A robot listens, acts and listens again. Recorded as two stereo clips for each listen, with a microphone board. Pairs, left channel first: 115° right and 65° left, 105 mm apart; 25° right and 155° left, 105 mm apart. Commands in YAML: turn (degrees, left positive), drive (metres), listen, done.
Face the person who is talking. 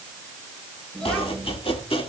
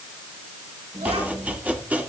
turn: 165
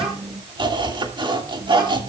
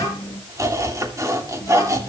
turn: 35
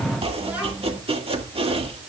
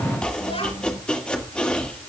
turn: -10
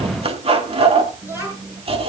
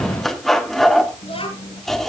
done: "Facing the child speaking."